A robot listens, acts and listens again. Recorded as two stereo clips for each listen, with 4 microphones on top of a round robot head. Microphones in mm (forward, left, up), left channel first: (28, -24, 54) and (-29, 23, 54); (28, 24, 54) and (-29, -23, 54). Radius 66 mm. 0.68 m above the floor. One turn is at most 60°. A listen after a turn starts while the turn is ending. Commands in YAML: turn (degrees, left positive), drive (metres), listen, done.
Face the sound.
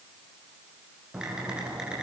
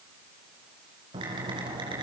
turn: -60
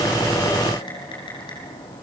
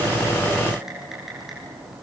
turn: -55
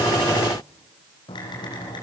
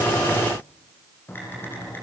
turn: -20
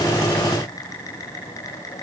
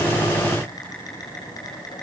done: "Found it: typing on a keyboard, straight ahead."